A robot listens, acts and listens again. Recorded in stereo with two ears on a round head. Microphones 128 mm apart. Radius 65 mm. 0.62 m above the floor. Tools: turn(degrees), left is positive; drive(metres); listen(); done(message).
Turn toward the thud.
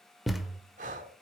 turn(degrees=30)
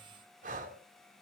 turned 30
listen()
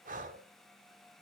done("I heard a thud, but can't make it out now. It was about 30° right or 150° left.")